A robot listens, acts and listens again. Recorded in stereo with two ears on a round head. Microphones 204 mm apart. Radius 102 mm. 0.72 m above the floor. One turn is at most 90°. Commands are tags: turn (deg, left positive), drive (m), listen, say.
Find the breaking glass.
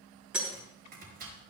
<turn deg="-30"/>
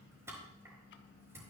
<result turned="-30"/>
<listen/>
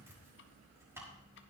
<say>I heard breaking glass, but can't make it out now. It was about 25° left or 145° right.</say>